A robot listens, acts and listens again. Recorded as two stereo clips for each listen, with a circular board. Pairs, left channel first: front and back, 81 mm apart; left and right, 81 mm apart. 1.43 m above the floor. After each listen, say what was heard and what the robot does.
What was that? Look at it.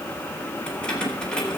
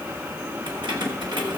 The keys jangling: 80° right. Turn 80° right.
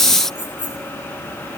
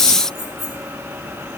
Facing the keys jangling, over 4 m away.